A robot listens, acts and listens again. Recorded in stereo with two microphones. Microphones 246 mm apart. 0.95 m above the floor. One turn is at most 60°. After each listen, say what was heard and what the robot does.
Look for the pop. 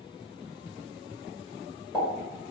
Turn 30° left.
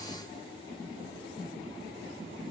Keep listening.
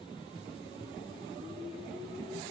I heard a pop, but can't make it out now. It was about 20° right or 140° left.